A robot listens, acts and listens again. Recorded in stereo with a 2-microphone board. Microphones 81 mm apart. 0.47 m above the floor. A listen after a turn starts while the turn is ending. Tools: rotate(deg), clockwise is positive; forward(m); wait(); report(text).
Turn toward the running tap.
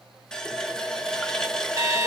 rotate(-30)
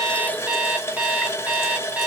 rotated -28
rotate(-145)
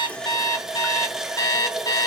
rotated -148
report("Facing the running tap, under 1 m away.")